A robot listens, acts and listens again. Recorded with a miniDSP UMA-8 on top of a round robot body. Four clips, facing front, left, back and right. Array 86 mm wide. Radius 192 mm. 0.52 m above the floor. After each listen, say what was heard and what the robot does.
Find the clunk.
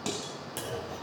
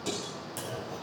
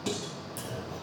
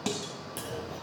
The clunk: 10° right. Turn 10° right.
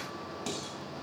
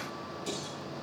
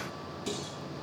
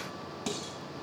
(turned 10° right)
Facing where the clunk came from. I can't hear it now.